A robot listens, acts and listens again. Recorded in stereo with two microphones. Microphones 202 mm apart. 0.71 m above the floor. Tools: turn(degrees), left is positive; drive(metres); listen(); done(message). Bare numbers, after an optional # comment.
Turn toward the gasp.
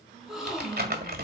turn(30)
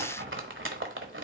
listen()
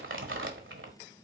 done("I heard a gasp, but can't make it out now. It was about 30° right or 150° left.")